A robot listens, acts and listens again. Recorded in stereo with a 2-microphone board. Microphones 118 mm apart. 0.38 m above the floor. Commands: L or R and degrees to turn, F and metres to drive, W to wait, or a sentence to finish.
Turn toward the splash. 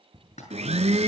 L75
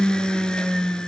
W
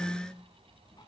I heard a splash, but can't make it out now. It was about straight ahead or 30° left.